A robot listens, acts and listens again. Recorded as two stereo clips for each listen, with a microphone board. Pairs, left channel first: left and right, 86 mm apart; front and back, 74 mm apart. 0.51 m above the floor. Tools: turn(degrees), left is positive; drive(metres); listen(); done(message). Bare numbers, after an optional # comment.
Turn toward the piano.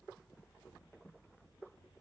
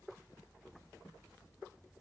listen()
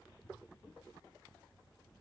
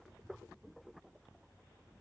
listen()
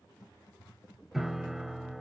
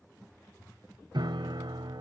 # The piano: 175° right.
turn(-175)
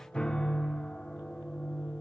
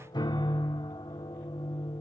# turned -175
# The piano is now 10° left.
turn(10)
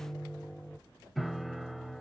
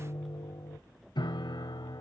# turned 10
done("Found it: a piano, straight ahead.")